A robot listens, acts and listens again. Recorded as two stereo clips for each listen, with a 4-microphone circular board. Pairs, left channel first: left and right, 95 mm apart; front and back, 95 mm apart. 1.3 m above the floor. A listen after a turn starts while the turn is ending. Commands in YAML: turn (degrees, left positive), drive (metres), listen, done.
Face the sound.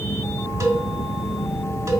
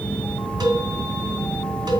turn: -140
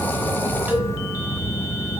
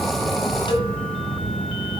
turn: -15
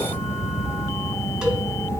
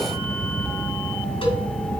listen: true
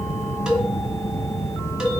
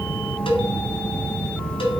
done: "Found it: a cowbell, straight ahead."